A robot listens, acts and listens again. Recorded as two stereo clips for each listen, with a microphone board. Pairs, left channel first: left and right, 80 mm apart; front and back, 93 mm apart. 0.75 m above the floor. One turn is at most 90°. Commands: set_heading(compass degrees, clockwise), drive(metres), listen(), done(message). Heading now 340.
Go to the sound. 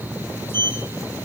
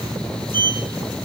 set_heading(250)
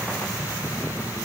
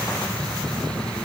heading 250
set_heading(190)
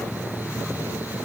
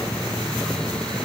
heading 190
listen()
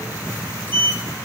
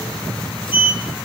set_heading(165)
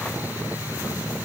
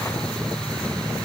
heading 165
listen()
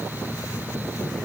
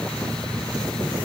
listen()
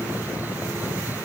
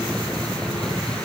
done("Facing where the sliding door came from. I can't hear it now. I did not reach it.")